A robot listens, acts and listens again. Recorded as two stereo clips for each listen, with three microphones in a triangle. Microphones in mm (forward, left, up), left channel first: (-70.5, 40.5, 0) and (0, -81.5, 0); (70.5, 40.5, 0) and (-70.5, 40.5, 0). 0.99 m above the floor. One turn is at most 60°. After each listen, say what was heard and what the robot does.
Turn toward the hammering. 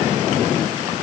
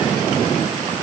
Keep listening.
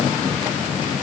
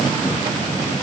Keep listening.
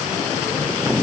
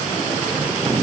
I can't make out hammering to turn to.